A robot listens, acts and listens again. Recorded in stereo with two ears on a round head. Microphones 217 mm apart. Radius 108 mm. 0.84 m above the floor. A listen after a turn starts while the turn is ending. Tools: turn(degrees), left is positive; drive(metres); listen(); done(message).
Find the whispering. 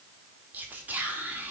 turn(degrees=-30)
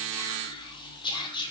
turn(degrees=20)
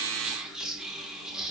done("Found it: whispering, straight ahead.")